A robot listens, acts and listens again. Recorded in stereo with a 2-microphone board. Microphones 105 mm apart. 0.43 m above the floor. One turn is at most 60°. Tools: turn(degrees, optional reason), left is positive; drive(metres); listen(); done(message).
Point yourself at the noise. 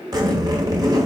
turn(degrees=-40, reason="The zipper: about 40° right or 140° right.")
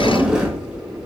turn(degrees=-10, reason="So it is at 10° right.")
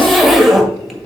done("Facing the zipper, 1 to 2 m away.")